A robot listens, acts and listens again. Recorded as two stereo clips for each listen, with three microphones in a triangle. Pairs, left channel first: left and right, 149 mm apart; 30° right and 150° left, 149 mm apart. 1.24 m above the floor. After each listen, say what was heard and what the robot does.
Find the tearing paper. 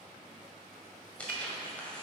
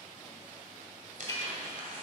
The tearing paper: 170° left. Turn 170° left.
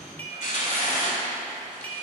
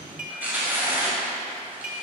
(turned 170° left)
The tearing paper is now 75° left. Turn 75° left.
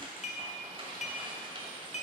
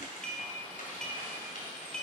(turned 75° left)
The tearing paper is now 40° right. Turn 40° right.
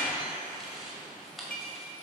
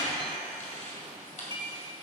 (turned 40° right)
Facing the tearing paper.